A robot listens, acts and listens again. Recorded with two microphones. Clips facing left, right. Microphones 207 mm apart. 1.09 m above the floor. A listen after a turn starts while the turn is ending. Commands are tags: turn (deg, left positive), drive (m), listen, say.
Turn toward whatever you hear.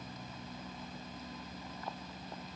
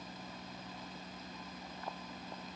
<listen/>
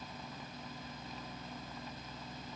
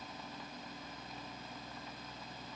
<listen/>
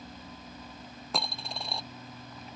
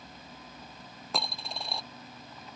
<turn deg="30"/>
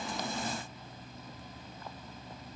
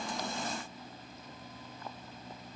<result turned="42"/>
<listen/>
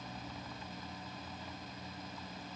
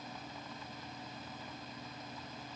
<say>I heard a dropped coin, but can't make it out now. It was about 40° right or 140° left.</say>